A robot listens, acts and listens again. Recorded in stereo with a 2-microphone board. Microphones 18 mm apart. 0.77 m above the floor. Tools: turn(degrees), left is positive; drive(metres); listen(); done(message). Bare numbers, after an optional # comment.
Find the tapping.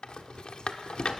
listen()
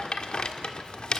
listen()
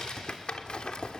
done("I can't make out tapping, only a rattle.")